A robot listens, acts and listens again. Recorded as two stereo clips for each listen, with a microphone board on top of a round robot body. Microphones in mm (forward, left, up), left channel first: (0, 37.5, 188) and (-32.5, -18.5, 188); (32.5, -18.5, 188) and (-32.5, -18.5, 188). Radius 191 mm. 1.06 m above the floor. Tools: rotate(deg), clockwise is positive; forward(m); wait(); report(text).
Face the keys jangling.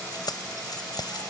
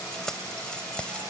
rotate(-75)
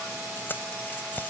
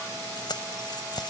report("Found it: keys jangling, straight ahead.")